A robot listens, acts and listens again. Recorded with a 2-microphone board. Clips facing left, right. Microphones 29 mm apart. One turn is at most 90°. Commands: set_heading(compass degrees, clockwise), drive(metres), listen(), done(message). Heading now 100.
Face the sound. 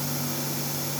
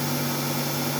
listen()
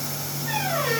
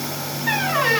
set_heading(150)
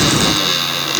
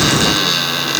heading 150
done("Facing the squeak, 2 to 4 m away.")